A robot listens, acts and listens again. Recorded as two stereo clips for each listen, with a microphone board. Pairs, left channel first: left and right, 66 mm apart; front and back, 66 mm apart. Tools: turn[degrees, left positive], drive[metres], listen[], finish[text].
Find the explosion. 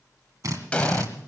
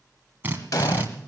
Thought: The explosion: 20° left.
Action: turn[20]
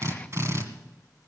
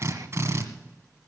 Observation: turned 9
Thought: Nothing new. It was at 10° left.
Action: turn[10]
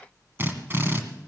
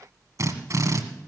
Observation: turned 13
Action: finish[I heard an explosion from this way, but can't make it out now.]